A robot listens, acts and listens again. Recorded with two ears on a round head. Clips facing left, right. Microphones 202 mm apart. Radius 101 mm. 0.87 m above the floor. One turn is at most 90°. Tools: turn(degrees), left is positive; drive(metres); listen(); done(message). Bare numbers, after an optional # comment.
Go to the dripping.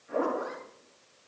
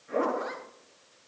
listen()
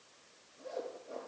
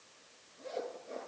listen()
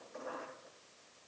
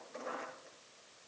done("I can't make out dripping to turn to.")